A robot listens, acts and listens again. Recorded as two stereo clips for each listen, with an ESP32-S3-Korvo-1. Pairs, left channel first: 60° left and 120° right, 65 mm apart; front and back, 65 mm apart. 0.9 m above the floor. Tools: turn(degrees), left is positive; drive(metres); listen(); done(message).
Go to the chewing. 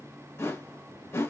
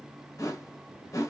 listen()
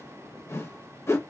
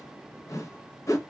listen()
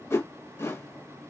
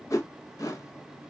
done("I can't make out chewing to turn to.")